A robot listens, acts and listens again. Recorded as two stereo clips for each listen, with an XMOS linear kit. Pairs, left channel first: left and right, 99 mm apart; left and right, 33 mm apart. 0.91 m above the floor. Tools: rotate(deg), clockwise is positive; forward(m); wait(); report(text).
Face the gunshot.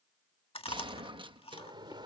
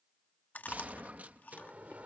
rotate(55)
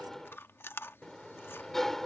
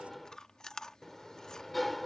wait()
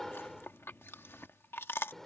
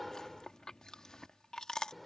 report("I heard a gunshot, but can't make it out now. It was about straight ahead or 70° right.")